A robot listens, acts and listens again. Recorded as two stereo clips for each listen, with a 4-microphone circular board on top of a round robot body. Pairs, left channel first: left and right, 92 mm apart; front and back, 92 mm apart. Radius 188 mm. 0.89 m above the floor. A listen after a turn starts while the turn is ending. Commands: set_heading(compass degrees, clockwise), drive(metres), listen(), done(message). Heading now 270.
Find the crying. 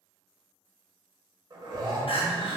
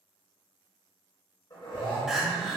set_heading(180)
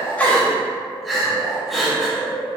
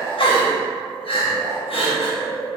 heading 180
done("Facing the crying, under 1 m away.")